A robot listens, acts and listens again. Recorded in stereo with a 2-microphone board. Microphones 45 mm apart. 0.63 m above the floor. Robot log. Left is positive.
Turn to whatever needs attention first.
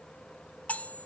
cmd idle
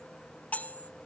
cmd idle
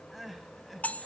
cmd yaw +30
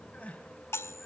note: So it is at 150° left.
cmd yaw +150
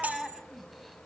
end: Facing the crying, 2 to 4 m away.